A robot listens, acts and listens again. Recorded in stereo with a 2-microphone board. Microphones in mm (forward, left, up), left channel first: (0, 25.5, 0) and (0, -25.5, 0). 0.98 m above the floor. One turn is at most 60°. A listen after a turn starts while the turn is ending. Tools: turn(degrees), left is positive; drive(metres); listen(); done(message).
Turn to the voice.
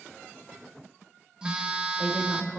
turn(degrees=-30)
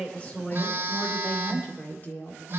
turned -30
turn(degrees=35)
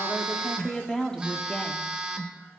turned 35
turn(degrees=15)
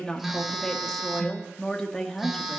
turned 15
turn(degrees=10)
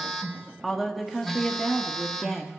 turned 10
done("Facing the woman speaking.")